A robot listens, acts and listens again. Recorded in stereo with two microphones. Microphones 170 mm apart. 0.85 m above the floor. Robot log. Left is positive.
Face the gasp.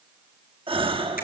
note: The gasp: about 30° right or 150° right.
cmd yaw -30
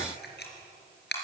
cmd idle
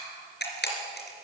end: I heard a gasp, but can't make it out now. It was about straight ahead or 120° right.